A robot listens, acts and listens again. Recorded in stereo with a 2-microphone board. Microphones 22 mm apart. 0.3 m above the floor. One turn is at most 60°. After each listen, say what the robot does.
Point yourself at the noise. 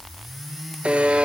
Turn 60° right.
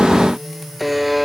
Facing the buzzer, under 1 m away.